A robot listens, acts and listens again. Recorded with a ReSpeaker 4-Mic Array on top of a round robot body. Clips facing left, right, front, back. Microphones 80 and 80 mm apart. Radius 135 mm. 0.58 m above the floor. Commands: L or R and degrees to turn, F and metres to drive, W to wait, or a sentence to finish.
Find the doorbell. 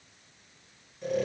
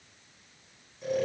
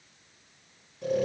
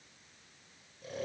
W
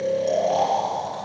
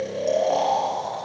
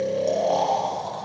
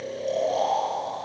W
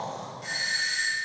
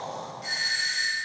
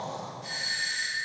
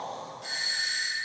L180
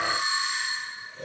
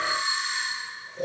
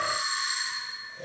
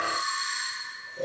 L20
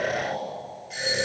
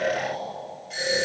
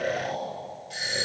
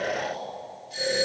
Facing the doorbell, over 4 m away.